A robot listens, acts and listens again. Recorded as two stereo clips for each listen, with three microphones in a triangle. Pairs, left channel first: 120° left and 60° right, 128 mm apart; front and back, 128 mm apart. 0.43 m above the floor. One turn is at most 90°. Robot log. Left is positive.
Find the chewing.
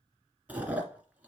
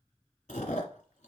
note: The chewing: 20° left.
cmd yaw +20
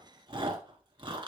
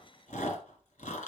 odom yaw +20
end: Facing the chewing, 1 to 2 m away.